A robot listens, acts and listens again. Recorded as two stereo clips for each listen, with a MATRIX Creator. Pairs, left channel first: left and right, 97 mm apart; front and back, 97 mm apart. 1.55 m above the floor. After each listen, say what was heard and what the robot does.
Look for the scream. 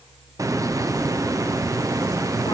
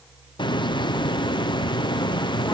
Keep listening.
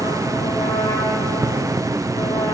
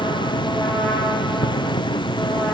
Keep listening.
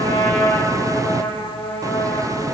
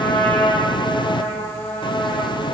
I can't make out a scream to turn to.